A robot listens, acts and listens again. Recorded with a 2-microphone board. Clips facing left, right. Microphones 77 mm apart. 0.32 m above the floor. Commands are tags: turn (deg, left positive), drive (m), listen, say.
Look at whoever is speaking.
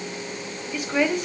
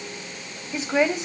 <turn deg="-20"/>
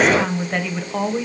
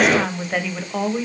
<say>Found it: a woman speaking, straight ahead, 1 to 2 m away.</say>